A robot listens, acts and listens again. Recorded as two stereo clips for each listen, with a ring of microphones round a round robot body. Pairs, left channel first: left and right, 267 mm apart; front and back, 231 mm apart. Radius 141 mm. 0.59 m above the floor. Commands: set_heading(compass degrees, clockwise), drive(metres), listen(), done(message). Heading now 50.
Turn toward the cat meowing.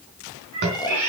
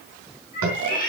set_heading(110)
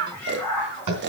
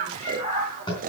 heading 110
set_heading(100)
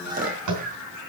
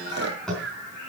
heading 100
done("Facing the cat meowing.")